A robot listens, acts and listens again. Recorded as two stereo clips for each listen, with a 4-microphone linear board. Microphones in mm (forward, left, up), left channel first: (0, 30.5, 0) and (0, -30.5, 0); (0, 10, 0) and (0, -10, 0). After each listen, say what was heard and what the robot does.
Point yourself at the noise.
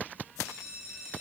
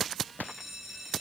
Turn 30° right.
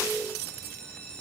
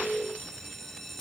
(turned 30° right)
So it is at 20° left. Turn 20° left.
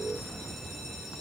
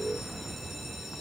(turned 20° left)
Keep listening.
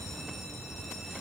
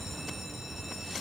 Keep listening.
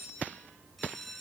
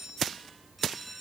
Found it: a bell, straight ahead.